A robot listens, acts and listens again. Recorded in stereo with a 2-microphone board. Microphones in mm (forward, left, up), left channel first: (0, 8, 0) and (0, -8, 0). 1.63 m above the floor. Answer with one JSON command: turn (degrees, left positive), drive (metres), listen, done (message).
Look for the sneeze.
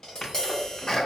{"turn": 45}
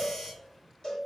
{"listen": true}
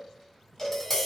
{"done": "I heard a sneeze, but can't make it out now. It was about straight ahead or 90° left."}